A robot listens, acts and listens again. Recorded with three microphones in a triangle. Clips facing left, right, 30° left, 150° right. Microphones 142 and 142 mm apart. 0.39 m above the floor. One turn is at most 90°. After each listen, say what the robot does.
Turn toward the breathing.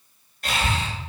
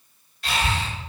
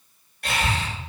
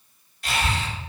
Turn 50° left.
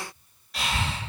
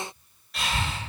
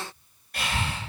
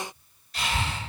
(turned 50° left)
Found it: breathing, straight ahead.